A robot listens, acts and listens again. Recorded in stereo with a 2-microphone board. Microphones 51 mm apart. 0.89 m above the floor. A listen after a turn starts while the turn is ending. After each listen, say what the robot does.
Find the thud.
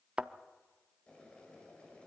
Turn 20° right.
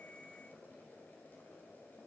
Keep listening.
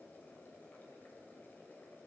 I heard a thud, but can't make it out now. It was about straight ahead or 140° right.